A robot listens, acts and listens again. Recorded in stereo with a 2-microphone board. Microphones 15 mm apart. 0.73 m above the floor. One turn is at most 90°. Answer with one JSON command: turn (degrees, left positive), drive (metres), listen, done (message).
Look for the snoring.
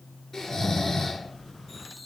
{"turn": 45}
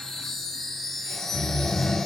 {"turn": 85}
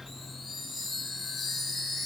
{"listen": true}
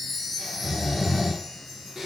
{"turn": -25}
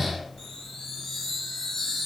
{"turn": -10}
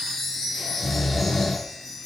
{"done": "Facing the snoring, 1 to 2 m away."}